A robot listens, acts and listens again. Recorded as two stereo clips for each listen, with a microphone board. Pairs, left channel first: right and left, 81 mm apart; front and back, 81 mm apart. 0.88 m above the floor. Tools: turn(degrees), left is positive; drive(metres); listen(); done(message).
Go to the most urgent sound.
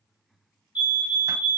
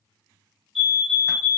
turn(degrees=-90)
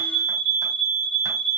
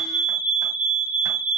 turn(degrees=-10)
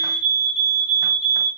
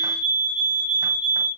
drive(metres=1.0)
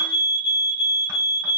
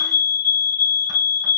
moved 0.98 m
turn(degrees=-10)
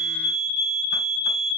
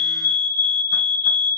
drive(metres=1.0)
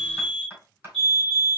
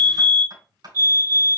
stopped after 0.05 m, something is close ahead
done("Arrived at the fire alarm, straight ahead.")